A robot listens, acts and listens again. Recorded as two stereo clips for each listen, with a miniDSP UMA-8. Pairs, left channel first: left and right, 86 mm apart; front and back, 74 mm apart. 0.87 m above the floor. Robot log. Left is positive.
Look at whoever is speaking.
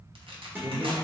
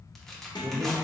note: The man speaking: 135° right.
cmd yaw -135
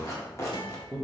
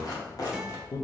note: The man speaking is now 15° right.
cmd yaw -15
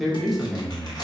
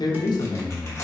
end: Facing the man speaking.